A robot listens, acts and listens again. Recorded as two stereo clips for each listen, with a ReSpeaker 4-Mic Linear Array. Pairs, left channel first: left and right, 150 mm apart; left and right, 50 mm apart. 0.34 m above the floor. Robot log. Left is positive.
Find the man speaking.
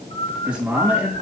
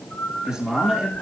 cmd yaw -30
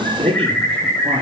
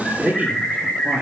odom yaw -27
note: So it is at 140° right.
cmd yaw -140
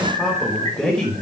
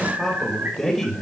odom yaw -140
end: Facing the man speaking.